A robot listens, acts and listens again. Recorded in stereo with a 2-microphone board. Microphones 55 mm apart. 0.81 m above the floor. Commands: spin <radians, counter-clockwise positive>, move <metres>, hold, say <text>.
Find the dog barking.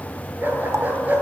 spin -0.61
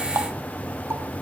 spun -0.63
hold
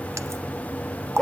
spin 0.17
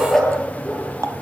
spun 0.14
say Found it: a dog barking, straight ahead.